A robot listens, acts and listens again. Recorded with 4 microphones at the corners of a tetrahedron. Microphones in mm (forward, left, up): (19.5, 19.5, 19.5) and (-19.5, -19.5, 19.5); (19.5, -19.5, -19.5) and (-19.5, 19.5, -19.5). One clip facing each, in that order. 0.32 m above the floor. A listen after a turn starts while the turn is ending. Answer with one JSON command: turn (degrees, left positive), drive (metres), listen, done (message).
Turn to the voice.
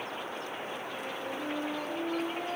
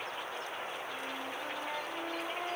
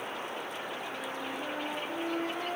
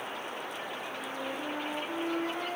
{"listen": true}
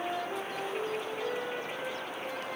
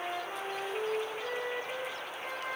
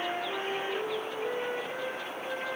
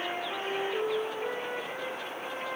{"listen": true}
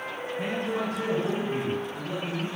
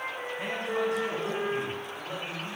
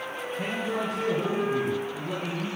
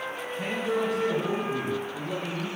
{"turn": -80}
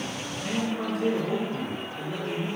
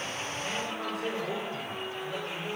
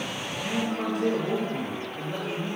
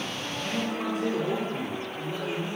{"turn": -30}
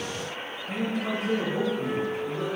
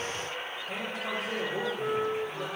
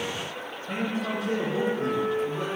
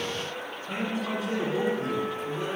{"done": "Facing the man speaking."}